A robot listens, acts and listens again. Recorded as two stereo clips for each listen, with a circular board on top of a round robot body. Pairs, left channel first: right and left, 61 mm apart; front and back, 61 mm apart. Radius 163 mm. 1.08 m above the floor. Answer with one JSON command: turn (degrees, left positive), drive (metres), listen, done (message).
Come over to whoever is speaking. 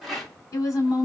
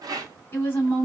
{"turn": -55}
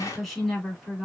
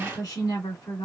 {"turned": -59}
{"drive": 1.0}
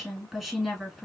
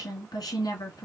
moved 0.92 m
{"drive": 1.0}
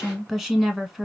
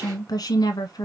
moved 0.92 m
{"turn": 10}
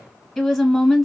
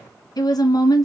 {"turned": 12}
{"drive": 1.0}
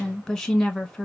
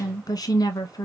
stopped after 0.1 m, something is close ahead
{"done": "Arrived at the woman speaking, straight ahead."}